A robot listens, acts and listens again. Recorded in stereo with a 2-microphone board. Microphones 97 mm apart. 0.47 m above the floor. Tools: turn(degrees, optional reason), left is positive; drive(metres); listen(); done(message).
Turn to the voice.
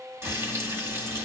listen()
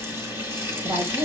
turn(degrees=-65, reason="The woman speaking: about 65° right or 115° right.")
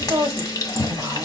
turn(degrees=-35, reason="So it is at 35° right.")
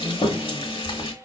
done("Found it: a woman speaking, straight ahead, 1 to 2 m away.")